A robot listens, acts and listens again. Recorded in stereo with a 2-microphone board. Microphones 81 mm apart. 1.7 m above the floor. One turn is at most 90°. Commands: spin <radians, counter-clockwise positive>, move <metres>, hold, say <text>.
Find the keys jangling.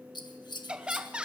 hold
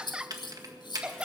spin -1.05
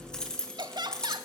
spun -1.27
spin 0.17
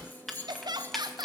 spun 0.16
say Found it: keys jangling, straight ahead.